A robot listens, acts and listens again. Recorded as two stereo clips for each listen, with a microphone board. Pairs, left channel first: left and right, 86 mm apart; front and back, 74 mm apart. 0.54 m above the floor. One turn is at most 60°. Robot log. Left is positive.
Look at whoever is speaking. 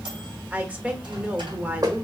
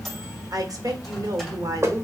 note: The woman speaking: 160° right.
cmd yaw -60
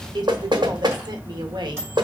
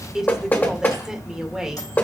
note: The woman speaking is now 100° right.
cmd yaw -60
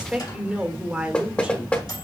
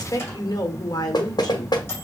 note: The woman speaking is now 15° right.
cmd yaw -15
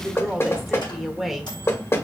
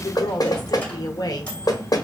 end: Facing the woman speaking.